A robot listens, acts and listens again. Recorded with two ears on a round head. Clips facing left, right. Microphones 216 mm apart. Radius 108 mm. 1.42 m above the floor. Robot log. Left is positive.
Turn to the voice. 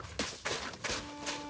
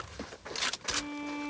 cmd idle
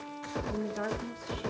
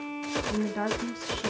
note: The woman speaking: about 60° right or 120° right.
cmd yaw -60
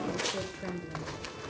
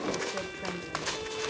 end: Found it: a woman speaking, straight ahead, 2 to 4 m away.